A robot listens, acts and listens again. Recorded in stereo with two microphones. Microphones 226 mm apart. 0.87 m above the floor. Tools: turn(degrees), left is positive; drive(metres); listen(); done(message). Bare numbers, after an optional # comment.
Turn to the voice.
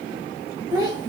# The child speaking: about 15° right or 165° right.
turn(-15)
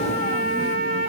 listen()
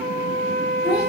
listen()
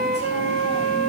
done("I heard a child speaking, but can't make it out now. It was about straight ahead or 150° right.")